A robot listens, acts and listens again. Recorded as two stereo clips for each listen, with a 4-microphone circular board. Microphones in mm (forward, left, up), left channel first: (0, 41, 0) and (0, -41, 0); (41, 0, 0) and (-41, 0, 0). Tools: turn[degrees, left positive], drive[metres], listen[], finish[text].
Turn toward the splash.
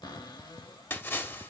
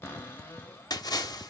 Thought: The splash: 30° left.
Action: turn[30]
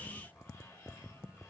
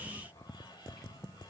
Action: finish[I heard a splash from this way, but can't make it out now.]